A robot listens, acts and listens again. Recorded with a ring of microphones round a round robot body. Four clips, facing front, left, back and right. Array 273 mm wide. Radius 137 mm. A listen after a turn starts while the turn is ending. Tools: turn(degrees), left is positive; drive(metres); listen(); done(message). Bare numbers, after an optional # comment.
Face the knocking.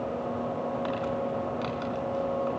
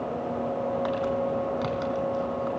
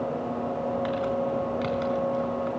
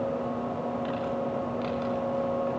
listen()
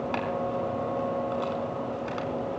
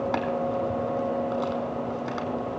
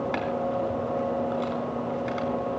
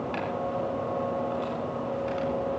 listen()
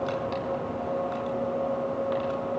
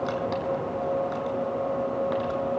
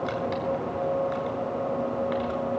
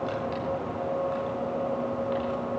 done("I can't make out knocking to turn to.")